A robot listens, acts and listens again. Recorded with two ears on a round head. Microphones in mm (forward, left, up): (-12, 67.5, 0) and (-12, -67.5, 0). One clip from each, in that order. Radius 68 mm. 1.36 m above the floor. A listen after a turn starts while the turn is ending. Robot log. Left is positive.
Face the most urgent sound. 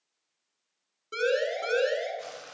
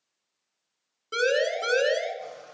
note: The siren: about 30° right or 150° right.
cmd yaw -30
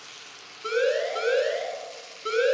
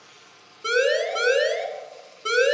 note: So it is at 120° right.
cmd yaw -120
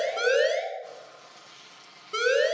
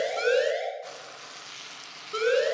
note: The siren is now 25° left.
cmd yaw +25
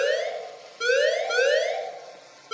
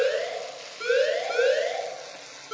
note: The siren is now 35° left.
cmd yaw +35
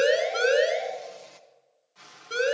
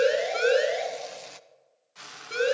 note: The siren is now 10° left.
cmd yaw +10
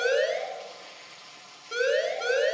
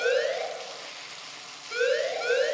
end: Facing the siren.